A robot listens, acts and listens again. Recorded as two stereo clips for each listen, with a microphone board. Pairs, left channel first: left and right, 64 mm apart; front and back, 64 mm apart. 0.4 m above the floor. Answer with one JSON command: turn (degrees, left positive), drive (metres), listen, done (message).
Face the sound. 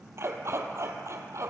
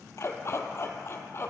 {"turn": -50}
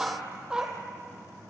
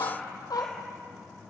{"turn": -15}
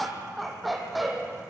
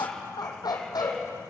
{"done": "Facing the dog barking."}